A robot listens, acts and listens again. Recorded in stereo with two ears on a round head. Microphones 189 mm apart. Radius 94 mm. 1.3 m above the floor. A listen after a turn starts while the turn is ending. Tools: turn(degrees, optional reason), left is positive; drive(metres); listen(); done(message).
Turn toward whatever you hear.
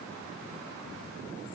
listen()
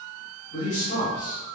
turn(degrees=70, reason="The man speaking: about 70° left or 110° left.")
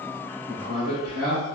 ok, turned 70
turn(degrees=10, reason="So it is at 10° left.")
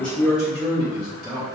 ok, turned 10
done("Found it: a man speaking, straight ahead, 2 to 4 m away.")